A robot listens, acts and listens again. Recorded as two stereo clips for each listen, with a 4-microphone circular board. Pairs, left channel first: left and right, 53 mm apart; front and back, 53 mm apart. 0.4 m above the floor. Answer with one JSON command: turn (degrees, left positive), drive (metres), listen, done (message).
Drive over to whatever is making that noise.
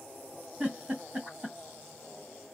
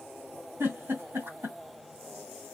{"turn": -155}
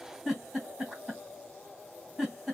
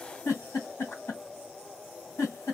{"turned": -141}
{"turn": -10}
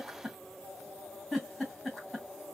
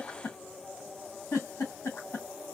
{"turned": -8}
{"drive": 1.0}
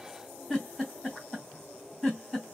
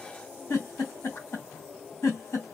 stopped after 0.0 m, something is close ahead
{"done": "Blocked. The giggle is further on, straight ahead."}